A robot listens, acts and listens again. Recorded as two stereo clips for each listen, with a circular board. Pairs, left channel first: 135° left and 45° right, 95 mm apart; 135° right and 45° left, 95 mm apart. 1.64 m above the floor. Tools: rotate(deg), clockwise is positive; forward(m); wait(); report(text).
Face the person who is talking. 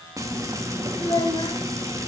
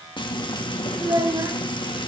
rotate(-95)
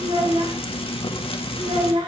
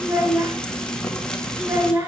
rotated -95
rotate(20)
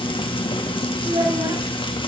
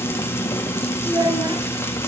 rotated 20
report("Found it: a child speaking, straight ahead.")